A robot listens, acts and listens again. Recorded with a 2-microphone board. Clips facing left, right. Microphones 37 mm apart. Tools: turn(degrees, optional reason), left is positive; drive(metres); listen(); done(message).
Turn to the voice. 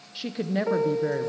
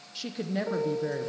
turn(degrees=15, reason="The woman speaking: about 15° left or 165° left.")
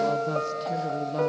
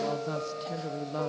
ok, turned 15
done("Facing the woman speaking, under 1 m away.")